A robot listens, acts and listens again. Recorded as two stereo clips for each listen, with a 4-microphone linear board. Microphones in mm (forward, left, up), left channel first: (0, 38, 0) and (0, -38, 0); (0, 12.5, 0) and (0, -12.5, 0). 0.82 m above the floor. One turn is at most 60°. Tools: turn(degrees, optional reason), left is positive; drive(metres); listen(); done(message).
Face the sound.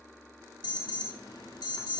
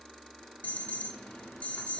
turn(degrees=60, reason="The alarm: about 70° left or 110° left.")
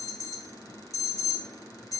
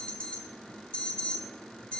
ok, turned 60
turn(degrees=45, reason="So it is at 45° left.")
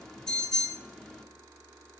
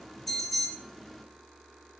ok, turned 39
done("Found it: an alarm, straight ahead.")